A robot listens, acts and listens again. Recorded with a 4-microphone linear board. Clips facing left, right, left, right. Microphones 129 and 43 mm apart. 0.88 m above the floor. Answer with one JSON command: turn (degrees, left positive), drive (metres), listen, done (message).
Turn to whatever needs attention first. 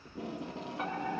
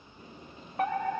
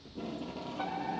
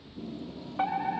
{"turn": -60}
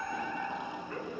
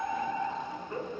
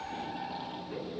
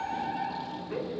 {"turn": -30}
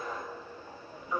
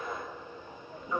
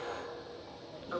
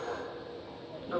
{"turn": 10}
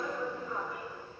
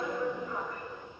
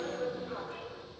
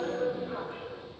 {"done": "Facing the fire alarm."}